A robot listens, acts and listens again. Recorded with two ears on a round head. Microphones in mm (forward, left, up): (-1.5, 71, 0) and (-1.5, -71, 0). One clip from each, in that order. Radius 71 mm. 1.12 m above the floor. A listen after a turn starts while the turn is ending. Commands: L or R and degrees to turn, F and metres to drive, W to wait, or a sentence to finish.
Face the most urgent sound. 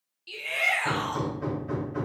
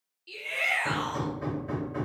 L25
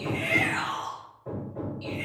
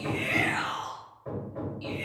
Found it: a shout, straight ahead.